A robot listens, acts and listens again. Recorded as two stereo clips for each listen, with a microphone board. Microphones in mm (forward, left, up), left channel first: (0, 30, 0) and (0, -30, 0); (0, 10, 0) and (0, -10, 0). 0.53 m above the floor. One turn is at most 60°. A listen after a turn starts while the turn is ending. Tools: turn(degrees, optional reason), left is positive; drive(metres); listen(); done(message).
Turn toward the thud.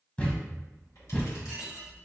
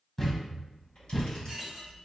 turn(degrees=20, reason="The thud: about 20° left or 160° left.")
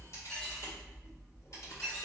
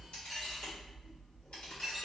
listen()
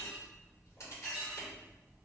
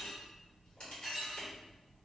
done("I heard a thud, but can't make it out now. It was about straight ahead or 140° left.")